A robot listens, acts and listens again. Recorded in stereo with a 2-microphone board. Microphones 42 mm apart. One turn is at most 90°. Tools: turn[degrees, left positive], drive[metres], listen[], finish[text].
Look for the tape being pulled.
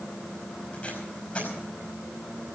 Thought: The tape being pulled: about 35° left or 145° left.
Action: turn[35]
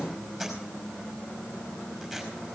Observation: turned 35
Action: finish[Found it: tape being pulled, straight ahead, over 4 m away.]